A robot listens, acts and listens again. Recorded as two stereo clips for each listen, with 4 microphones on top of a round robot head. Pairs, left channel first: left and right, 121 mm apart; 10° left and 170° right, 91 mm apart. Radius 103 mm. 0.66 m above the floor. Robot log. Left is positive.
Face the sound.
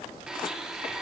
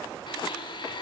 end: Found it: a blender, straight ahead, 1 to 2 m away.